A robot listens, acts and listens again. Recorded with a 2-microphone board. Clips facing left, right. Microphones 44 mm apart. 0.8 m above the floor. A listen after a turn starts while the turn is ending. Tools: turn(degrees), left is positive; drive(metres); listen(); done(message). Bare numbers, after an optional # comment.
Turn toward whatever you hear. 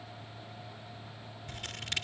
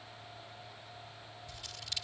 # The scissors: about 50° left or 130° left.
turn(50)
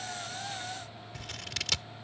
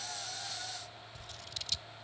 # So it is at 80° left.
turn(80)
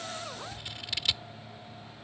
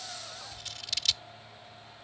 # The scissors is now 15° left.
turn(15)
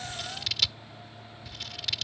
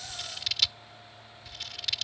done("Found it: scissors, straight ahead.")